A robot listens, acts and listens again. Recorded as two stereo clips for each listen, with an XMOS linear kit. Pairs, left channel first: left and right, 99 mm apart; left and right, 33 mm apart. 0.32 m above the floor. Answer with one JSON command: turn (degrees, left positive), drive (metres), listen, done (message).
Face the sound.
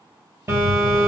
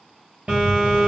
{"turn": -30}
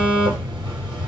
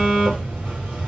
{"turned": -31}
{"turn": -120}
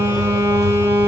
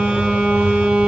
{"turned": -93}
{"turn": -30}
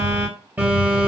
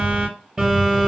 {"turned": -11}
{"turn": -15}
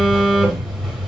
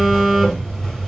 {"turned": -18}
{"done": "Facing the phone buzzing, 2 to 4 m away."}